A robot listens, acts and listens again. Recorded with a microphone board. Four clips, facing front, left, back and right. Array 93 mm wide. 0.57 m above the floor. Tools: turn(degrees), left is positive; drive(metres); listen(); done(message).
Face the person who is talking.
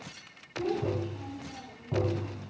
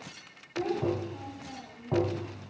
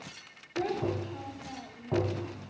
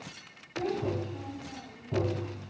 turn(degrees=170)
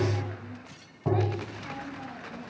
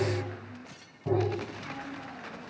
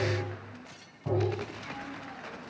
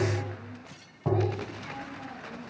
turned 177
listen()
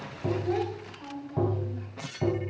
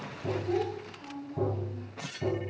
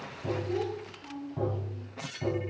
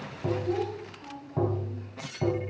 done("Facing the child speaking.")